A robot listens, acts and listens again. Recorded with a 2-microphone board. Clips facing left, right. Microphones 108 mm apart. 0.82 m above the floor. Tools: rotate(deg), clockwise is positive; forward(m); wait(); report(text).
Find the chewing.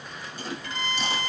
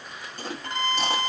rotate(50)
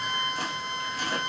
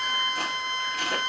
rotate(75)
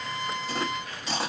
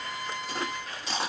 report("Facing the chewing.")